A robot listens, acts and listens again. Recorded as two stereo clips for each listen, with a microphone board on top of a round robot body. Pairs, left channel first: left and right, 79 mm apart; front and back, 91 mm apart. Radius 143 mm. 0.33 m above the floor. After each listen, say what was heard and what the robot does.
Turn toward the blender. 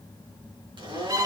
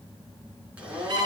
The blender: 100° right. Turn 100° right.
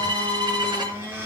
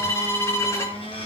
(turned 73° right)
The blender is now 25° right. Turn 25° right.
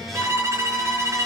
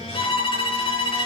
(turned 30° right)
Keep listening.
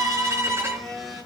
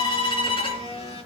Facing the blender, over 4 m away.